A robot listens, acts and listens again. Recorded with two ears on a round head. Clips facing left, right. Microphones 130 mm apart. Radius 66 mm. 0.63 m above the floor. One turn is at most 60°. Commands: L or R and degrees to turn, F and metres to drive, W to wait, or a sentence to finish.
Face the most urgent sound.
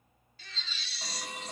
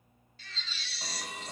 L60
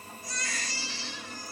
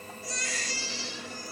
L40
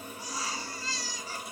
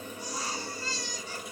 Facing the baby crying, over 4 m away.